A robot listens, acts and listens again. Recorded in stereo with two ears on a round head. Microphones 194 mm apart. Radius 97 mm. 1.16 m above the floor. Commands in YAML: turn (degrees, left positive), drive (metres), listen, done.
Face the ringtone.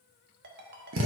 turn: -50
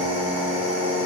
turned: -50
listen: true
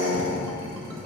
listen: true
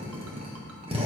done: "I heard a ringtone, but can't make it out now. It was about straight ahead or 80° right."